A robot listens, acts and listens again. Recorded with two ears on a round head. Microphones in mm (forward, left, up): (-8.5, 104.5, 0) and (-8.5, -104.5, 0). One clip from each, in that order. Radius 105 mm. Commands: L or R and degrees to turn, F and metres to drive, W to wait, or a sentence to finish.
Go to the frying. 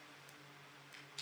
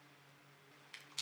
W
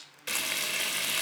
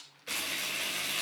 L50
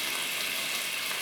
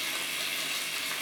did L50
L10
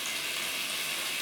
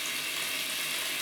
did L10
F1.0
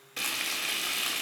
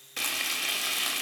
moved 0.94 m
R15
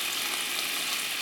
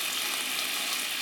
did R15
F1.0
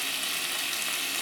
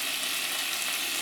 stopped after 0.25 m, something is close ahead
Arrived at the frying, straight ahead.